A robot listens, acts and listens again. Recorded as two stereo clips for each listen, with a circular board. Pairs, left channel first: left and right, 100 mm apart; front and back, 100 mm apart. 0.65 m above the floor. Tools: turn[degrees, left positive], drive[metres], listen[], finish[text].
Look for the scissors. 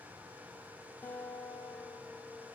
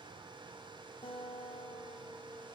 Action: listen[]
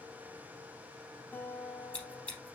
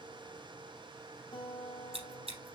Thought: The scissors: 170° left.
Action: turn[170]
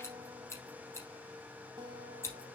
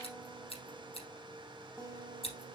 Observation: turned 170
Thought: The scissors is now 25° left.
Action: turn[25]
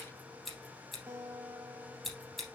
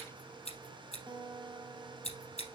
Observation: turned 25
Action: finish[Facing the scissors, 2 to 4 m away.]